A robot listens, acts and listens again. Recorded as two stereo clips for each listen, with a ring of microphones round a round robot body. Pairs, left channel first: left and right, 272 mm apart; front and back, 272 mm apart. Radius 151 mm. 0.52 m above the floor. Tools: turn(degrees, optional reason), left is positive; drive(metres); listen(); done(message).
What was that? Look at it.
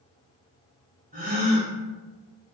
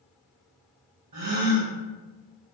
turn(degrees=-155, reason="The gasp: 155° right.")
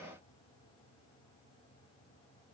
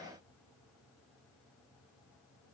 done("I heard a gasp from this way, but can't make it out now.")